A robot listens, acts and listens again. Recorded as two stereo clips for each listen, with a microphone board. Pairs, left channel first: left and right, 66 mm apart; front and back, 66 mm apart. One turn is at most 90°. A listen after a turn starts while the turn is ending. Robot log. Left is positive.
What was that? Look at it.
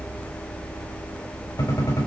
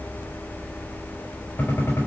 note: The gunshot: 60° left.
cmd yaw +60
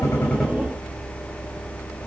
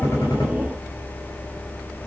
end: I heard a gunshot from this way, but can't make it out now.